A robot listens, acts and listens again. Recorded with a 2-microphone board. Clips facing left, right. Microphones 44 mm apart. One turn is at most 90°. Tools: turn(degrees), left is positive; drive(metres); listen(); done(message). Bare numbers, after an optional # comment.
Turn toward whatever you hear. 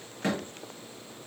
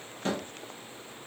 turn(90)
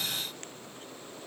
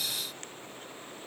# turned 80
# Nothing new. It was at 10° left.
turn(10)
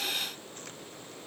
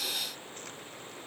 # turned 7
done("I heard a door slam from this way, but can't make it out now.")